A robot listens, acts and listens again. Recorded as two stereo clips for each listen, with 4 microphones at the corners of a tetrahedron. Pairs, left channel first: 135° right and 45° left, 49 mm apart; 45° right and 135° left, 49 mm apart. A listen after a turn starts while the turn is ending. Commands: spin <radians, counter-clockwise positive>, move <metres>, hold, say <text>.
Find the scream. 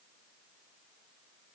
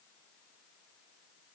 hold
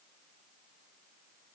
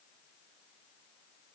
hold
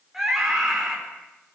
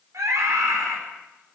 spin 2.27
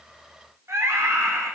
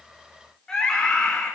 spin 0.52
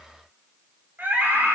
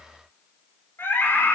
say Found it: a scream, straight ahead.